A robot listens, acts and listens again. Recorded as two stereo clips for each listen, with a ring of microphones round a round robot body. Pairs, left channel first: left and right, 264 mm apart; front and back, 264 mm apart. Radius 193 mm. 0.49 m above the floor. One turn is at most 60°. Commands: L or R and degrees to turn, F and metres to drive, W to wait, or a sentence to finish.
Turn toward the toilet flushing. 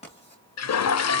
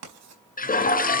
L60
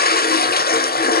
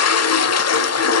L30
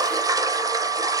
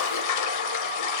R10
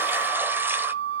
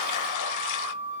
W
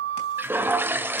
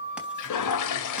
Facing the toilet flushing, 1 to 2 m away.